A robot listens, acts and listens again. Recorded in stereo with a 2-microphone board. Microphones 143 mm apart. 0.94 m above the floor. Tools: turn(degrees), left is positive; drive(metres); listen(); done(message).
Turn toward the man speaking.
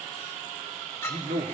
turn(degrees=-90)
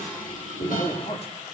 turn(degrees=45)
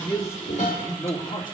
turn(degrees=35)
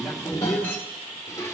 done("Facing the man speaking.")